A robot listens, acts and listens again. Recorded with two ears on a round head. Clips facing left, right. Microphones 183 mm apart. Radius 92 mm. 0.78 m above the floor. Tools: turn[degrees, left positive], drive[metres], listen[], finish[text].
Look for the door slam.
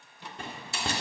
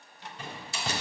Thought: The door slam: about 45° left or 135° left.
Action: turn[45]
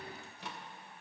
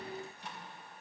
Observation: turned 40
Action: listen[]
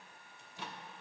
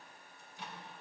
Action: finish[I heard a door slam, but can't make it out now. It was about 5° left or 95° left.]